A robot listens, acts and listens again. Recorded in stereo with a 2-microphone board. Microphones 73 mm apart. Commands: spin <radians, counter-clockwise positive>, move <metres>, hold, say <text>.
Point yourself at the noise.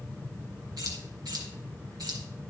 spin -1.57
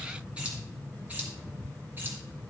spin -0.44
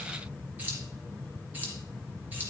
spin -0.44
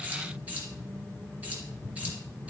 spin -0.35
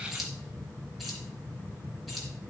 say Found it: keys jangling, straight ahead.